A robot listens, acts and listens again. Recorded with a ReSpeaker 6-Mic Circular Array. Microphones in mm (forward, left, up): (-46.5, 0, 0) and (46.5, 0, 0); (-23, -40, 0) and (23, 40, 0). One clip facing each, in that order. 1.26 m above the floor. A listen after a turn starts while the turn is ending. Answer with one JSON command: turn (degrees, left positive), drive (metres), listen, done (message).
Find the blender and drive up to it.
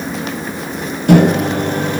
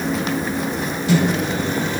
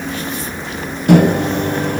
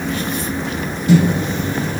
{"listen": true}
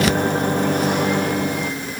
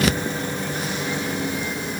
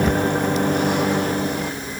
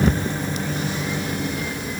{"listen": true}
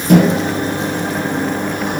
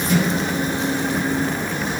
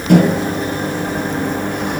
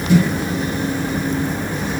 {"done": "I can't make out a blender to turn to."}